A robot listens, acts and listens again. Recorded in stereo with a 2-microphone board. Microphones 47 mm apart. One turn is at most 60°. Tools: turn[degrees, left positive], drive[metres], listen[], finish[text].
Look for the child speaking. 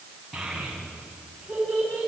Action: turn[-30]
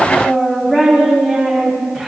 Thought: So it is at 10° left.
Action: turn[10]
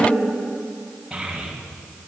Action: finish[Facing the child speaking, over 4 m away.]